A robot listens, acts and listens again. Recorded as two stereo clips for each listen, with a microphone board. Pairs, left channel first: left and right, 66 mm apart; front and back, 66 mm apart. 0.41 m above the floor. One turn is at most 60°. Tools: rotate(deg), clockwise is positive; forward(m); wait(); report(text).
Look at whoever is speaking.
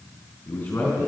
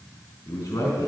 rotate(-35)
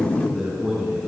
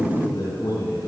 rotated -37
report("Found it: a man speaking, straight ahead, over 4 m away.")